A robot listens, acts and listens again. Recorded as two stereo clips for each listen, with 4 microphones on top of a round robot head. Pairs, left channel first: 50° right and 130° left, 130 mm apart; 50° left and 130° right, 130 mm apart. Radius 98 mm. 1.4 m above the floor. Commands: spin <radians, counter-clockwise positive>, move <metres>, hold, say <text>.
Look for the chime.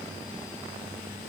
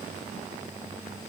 hold
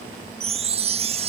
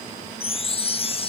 spin 1.57
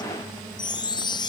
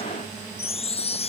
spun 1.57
spin 0.17
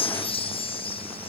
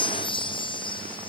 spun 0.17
say Found it: a chime, straight ahead.